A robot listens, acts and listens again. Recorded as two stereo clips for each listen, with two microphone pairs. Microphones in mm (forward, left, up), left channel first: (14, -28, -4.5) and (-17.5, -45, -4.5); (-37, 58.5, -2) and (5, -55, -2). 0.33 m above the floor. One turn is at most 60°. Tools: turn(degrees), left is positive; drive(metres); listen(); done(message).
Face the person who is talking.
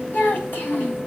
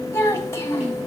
turn(degrees=45)
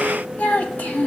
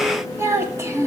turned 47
done("Facing the child speaking.")